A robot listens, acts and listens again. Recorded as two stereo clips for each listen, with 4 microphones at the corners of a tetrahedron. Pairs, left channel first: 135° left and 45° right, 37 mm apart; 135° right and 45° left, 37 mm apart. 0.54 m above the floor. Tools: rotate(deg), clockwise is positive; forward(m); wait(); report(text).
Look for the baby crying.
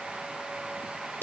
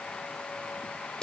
wait()
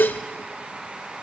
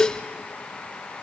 wait()
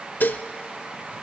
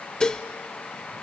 report("I can't make out a baby crying, only dishes clattering.")